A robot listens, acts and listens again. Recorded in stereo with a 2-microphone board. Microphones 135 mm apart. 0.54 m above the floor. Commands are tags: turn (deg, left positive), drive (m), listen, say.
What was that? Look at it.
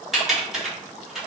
<turn deg="30"/>
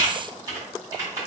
<turn deg="-30"/>
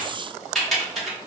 <say>Found it: typing on a keyboard, straight ahead.</say>